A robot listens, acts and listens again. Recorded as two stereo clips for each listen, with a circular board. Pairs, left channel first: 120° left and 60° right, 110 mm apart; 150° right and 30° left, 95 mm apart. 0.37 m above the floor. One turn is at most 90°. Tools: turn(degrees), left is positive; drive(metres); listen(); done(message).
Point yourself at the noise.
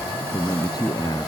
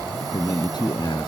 turn(degrees=90)
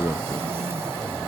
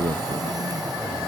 turn(degrees=65)
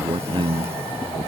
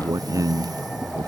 turn(degrees=-20)
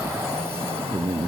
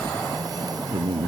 done("Facing the man speaking.")